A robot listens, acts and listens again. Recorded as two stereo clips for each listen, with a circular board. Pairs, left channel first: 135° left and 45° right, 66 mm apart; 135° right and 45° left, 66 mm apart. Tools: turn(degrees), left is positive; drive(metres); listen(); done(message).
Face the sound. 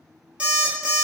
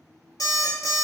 turn(degrees=-115)
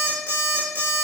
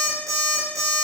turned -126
turn(degrees=10)
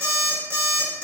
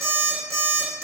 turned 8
done("Found it: an alarm clock, straight ahead.")